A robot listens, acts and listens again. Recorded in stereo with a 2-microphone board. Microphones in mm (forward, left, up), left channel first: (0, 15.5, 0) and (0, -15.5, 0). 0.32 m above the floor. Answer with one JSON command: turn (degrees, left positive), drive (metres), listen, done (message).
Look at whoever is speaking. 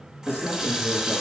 {"turn": -60}
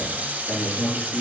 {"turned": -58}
{"done": "Found it: a man speaking, straight ahead."}